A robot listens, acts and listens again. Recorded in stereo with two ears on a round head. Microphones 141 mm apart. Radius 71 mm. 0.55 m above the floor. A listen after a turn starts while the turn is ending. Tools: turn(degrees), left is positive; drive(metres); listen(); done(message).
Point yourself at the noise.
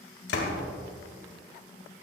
turn(degrees=75)
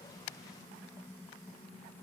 listen()
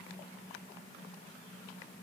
done("I heard a door slam, but can't make it out now. It was about straight ahead or 30° left.")